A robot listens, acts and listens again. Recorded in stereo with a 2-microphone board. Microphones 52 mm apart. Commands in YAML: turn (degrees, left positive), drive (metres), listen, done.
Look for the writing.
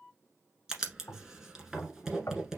turn: -30
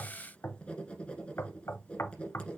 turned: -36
turn: 20
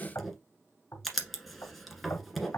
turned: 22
done: "Facing the writing, 1 to 2 m away."